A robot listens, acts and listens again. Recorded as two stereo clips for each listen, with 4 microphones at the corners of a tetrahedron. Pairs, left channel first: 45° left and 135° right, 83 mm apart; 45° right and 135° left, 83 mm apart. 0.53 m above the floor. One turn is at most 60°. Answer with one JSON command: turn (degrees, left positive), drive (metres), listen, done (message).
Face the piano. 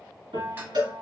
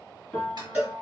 {"turn": -60}
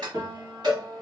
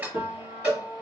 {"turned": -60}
{"turn": -60}
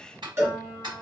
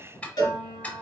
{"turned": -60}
{"turn": -45}
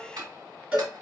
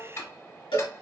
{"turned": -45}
{"listen": true}
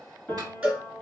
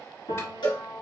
{"turn": -25}
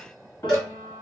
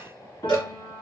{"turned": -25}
{"turn": -10}
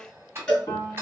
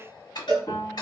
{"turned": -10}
{"done": "Facing the piano, 2 to 4 m away."}